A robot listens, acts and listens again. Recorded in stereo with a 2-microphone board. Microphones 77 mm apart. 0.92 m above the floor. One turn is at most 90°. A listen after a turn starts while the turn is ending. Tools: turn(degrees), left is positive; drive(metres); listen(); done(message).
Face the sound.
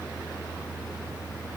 listen()
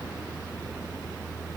listen()
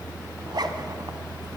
turn(degrees=-65)
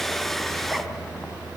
listen()
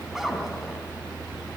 done("Facing the zipper, 1 to 2 m away.")